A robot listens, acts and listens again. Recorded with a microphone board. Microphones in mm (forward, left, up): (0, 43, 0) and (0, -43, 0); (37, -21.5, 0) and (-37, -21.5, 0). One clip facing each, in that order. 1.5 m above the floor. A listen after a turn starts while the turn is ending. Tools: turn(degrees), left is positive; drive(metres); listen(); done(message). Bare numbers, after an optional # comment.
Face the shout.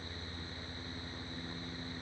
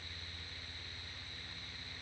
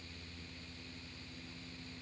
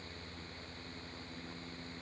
listen()
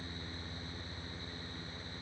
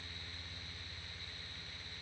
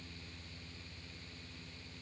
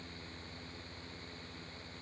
listen()
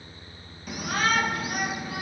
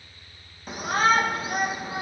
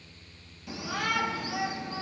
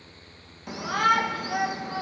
# The shout: 150° right.
turn(-150)
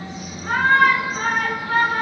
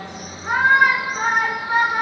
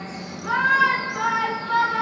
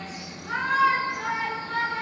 # The shout is now 15° right.
turn(-15)
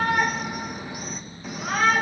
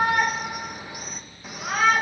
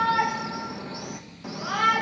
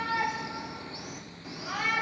done("Found it: a shout, straight ahead, 2 to 4 m away.")